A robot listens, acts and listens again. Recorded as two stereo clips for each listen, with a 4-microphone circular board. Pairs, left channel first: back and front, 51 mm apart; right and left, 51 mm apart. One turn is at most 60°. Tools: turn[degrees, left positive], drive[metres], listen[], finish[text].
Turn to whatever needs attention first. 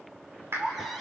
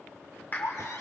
Thought: The baby crying: 90° right.
Action: turn[-60]
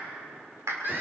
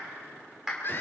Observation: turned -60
Thought: The baby crying is now 40° right.
Action: turn[-40]
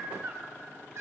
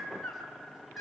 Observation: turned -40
Action: finish[Facing the baby crying, over 4 m away.]